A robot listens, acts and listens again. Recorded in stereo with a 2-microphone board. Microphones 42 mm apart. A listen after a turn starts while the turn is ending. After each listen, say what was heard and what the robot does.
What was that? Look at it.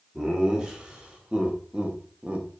The laughter: about 30° right or 150° right. Turn 30° right.
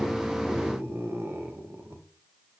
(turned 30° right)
So it is at 95° right. Turn 95° right.
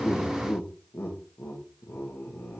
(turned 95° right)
The laughter is now 65° left. Turn 65° left.
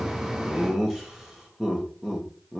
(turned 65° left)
The laughter is now 10° right. Turn 10° right.
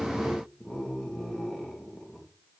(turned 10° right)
Facing the laughter, 1 to 2 m away.